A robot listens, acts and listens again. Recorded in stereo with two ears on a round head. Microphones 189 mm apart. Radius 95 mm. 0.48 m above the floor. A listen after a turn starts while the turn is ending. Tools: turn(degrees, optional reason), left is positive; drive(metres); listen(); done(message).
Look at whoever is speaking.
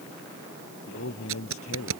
turn(degrees=90)
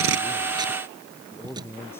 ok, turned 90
turn(degrees=10, reason="So it is at 10° left.")
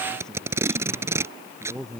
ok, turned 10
done("Found it: a man speaking, straight ahead.")